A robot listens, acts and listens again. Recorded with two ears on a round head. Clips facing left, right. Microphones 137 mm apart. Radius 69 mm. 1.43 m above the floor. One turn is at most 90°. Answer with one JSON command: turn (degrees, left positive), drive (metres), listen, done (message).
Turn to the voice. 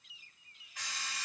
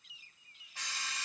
{"listen": true}
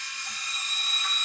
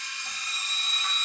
{"listen": true}
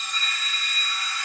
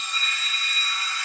{"done": "I can't make out anyone speaking, only an alarm clock."}